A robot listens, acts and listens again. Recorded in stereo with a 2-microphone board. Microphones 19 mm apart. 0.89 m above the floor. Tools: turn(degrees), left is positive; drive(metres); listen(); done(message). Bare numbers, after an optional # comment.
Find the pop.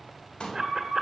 # The pop: about 70° left or 110° left.
turn(70)
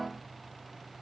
listen()
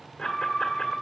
done("I heard a pop, but can't make it out now. It was about straight ahead or 40° left.")